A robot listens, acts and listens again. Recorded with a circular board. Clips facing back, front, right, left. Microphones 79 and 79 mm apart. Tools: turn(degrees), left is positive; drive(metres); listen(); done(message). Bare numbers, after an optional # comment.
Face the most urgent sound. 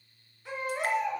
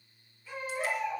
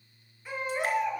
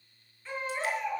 # The baby crying: 170° right.
turn(-170)
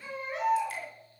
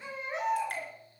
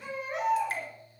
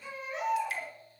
# The baby crying is now 65° right.
turn(-65)
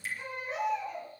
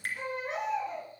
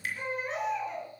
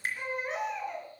done("Facing the baby crying.")